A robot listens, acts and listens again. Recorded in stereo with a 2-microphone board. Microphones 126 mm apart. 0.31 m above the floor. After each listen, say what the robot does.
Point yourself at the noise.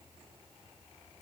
Keep listening.
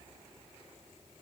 Keep listening.
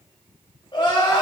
Turn 40° left.
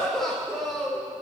Facing the crying, over 4 m away.